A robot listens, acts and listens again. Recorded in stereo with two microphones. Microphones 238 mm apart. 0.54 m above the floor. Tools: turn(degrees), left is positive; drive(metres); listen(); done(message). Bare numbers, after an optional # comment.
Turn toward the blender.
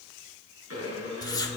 turn(-90)
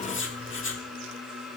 done("Facing the blender.")